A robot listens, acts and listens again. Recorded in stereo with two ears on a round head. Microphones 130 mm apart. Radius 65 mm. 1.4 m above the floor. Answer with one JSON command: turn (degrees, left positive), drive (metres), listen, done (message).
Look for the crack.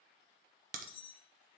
{"turn": -60}
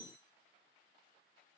{"listen": true}
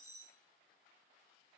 {"done": "I heard a crack, but can't make it out now. It was about straight ahead or 60° right."}